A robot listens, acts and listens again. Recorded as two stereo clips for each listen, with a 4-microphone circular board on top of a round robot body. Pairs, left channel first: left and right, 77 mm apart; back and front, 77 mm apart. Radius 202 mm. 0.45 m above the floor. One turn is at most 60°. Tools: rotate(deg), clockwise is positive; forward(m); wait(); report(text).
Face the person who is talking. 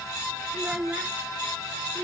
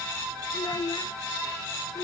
rotate(60)
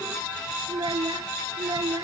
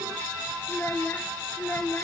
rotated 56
rotate(60)
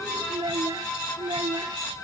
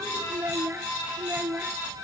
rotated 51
rotate(60)
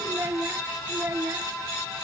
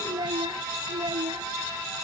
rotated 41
rotate(30)
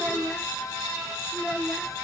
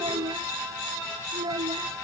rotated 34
report("Facing the child speaking.")